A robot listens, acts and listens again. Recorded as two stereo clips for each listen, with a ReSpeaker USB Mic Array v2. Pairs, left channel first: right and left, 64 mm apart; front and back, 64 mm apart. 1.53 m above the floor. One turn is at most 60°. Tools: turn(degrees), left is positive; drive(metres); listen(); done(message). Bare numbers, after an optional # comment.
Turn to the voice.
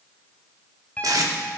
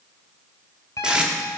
listen()
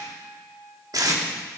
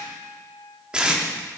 listen()
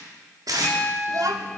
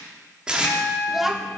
# The child speaking: 90° left.
turn(60)
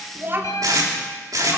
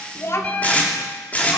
# The child speaking is now 40° left.
turn(40)
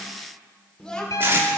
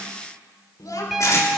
# The child speaking is now 15° right.
turn(-15)
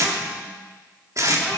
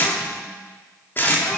listen()
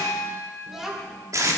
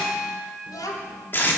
done("Facing the child speaking.")